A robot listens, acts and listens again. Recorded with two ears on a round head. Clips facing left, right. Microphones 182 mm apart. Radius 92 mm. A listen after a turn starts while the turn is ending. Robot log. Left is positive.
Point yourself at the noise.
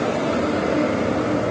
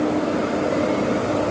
cmd idle
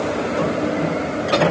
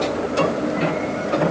cmd idle
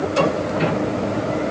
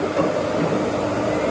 end: I can't make out anything to turn to.